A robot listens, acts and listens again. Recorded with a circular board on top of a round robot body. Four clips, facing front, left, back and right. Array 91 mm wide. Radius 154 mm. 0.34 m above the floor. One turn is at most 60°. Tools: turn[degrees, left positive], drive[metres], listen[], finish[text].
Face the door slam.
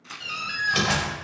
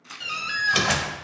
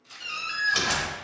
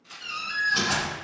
Thought: The door slam: 80° left.
Action: turn[60]
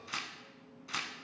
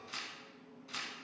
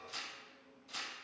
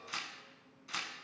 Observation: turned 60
Thought: Nothing new. It was at 20° left.
Action: turn[20]
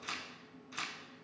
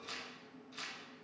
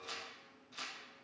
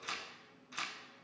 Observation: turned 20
Action: finish[Facing where the door slam came from. I can't hear it now.]